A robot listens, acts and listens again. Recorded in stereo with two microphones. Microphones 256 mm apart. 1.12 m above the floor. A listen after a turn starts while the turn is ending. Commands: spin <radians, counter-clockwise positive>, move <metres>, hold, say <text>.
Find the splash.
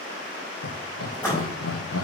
spin 0.52
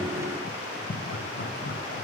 hold
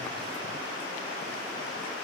say I heard a splash, but can't make it out now. It was about 20° right or 140° left.